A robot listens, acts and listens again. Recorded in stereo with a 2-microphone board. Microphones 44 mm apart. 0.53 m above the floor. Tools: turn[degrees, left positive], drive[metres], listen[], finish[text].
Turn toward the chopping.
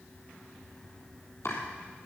Thought: The chopping: about 75° left or 105° left.
Action: turn[75]
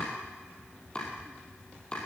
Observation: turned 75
Thought: So it is at 25° left.
Action: turn[25]
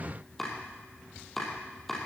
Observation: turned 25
Action: finish[Found it: chopping, straight ahead, over 4 m away.]